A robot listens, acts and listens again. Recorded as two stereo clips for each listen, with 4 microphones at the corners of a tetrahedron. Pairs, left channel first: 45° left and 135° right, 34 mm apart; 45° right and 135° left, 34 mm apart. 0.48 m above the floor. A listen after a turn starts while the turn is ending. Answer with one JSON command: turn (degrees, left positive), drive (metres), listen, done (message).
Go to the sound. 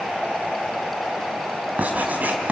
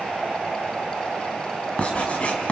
{"turn": -100}
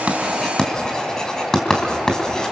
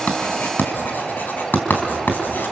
{"turn": -25}
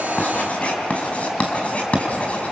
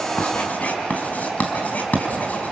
{"drive": 1.0}
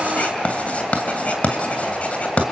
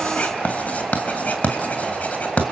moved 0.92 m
{"drive": 1.0}
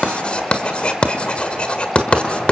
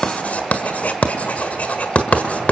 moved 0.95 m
{"turn": -10}
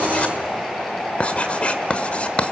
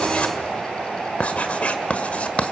{"drive": 1.0}
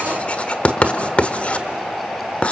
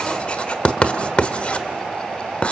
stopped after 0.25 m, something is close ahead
{"done": "I am next to the writing."}